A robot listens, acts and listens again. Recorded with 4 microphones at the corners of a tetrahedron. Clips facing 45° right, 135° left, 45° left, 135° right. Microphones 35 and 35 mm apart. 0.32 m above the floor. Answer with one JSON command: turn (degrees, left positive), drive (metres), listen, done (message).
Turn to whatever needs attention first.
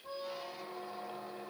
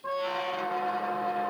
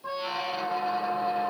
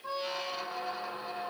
{"listen": true}
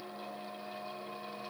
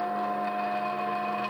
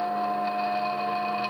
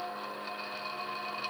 {"listen": true}
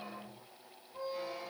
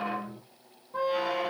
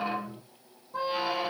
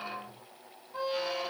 {"done": "I can't make out anything urgent, only a squeak."}